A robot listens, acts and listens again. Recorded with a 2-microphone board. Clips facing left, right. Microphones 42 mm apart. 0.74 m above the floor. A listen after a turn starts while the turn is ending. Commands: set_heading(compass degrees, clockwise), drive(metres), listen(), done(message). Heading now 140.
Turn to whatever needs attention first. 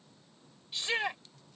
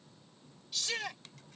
set_heading(115)
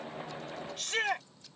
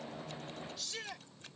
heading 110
set_heading(350)
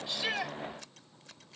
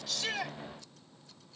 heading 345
listen()
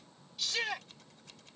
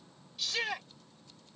done("Found it: a shout, straight ahead.")